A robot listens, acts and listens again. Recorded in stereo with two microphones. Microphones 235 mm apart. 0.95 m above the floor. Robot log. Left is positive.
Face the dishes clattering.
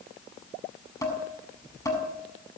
cmd yaw +30
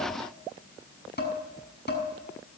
note: So it is at 135° left.
cmd yaw +135
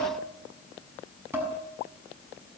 note: The dishes clattering is now 10° right.
cmd yaw -10
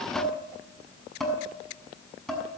end: Facing the dishes clattering.